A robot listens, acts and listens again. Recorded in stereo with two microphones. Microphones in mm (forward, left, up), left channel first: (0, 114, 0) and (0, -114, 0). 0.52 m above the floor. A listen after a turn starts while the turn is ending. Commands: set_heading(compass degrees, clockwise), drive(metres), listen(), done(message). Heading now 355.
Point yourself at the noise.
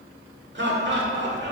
set_heading(45)
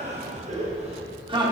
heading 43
set_heading(63)
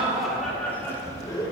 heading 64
set_heading(44)
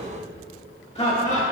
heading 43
set_heading(13)
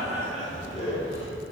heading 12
set_heading(342)
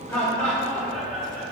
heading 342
done("Found it: laughter, straight ahead, 1 to 2 m away.")